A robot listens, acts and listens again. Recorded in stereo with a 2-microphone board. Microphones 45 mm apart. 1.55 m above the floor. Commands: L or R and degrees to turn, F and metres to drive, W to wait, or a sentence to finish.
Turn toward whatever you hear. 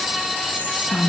L35
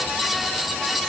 W
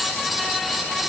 W
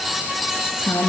L115
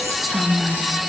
Facing the whispering.